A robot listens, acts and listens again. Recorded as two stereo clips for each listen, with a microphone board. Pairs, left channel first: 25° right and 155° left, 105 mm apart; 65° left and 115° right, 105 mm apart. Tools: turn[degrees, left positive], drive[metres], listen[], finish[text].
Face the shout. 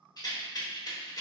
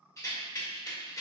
Action: listen[]
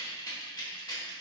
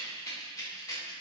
Action: listen[]
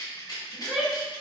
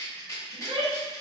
Thought: The shout: 125° right.
Action: turn[-125]
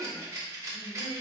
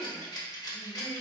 Thought: The shout is now 35° right.
Action: turn[-35]
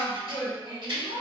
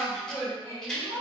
Action: finish[Found it: a shout, straight ahead.]